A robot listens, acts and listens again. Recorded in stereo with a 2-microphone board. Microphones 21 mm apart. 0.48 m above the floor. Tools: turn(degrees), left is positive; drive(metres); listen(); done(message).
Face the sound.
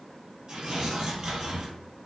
turn(degrees=-40)
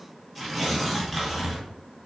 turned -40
done("Facing the tearing paper, 1 to 2 m away.")